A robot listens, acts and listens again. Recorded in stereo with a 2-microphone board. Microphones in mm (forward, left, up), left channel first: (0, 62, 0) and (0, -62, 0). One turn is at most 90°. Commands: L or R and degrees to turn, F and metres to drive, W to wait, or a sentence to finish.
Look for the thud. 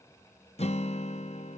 W
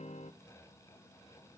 W
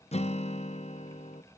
I can't make out a thud to turn to.